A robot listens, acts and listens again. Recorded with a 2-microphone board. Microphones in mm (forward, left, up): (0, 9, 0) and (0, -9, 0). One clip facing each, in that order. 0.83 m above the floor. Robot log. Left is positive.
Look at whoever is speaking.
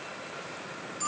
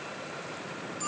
cmd idle
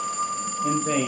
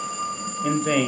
note: The man speaking: about 60° right or 120° right.
cmd yaw -60
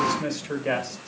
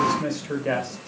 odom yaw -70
note: So it is at 10° left.
cmd yaw +10
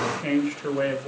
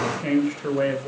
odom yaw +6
end: Facing the man speaking, 2 to 4 m away.